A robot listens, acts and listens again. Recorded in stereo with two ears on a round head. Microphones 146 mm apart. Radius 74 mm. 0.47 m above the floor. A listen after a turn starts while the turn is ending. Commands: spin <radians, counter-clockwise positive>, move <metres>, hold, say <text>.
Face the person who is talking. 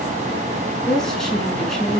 spin 0.52
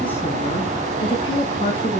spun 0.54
spin 2.53
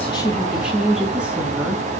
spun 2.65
say Facing the woman speaking.